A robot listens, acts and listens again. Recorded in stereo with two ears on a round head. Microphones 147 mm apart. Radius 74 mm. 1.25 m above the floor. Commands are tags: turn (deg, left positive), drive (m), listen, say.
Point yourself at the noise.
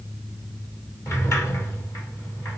<turn deg="20"/>
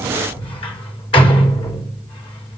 <turn deg="145"/>
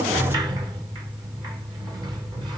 <turn deg="-25"/>
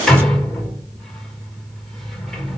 <say>Found it: a sliding door, straight ahead.</say>